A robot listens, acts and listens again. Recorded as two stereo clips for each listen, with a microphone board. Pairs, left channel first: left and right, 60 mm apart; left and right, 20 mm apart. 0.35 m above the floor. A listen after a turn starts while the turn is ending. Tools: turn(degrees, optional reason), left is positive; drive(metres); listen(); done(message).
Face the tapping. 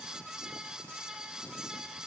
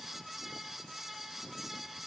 listen()
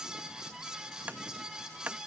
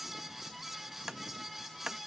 turn(degrees=-25, reason="The tapping: about 25° right or 155° right.")
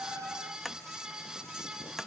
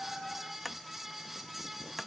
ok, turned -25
done("Facing the tapping.")